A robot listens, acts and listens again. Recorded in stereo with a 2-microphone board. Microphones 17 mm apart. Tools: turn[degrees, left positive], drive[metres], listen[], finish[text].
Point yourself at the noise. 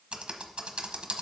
Thought: The typing on a keyboard: about 75° right or 105° right.
Action: turn[-75]
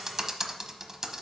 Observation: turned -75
Thought: So it is at 30° right.
Action: turn[-30]
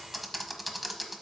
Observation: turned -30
Action: finish[Facing the typing on a keyboard, under 1 m away.]